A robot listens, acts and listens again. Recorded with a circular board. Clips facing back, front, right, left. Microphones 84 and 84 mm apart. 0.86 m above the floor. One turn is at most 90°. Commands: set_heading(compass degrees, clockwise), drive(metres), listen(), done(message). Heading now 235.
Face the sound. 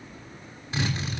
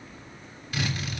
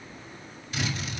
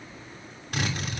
set_heading(145)
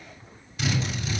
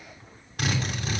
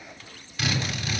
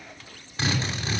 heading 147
set_heading(117)
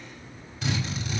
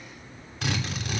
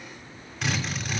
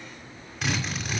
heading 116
done("Facing the drill, 2 to 4 m away.")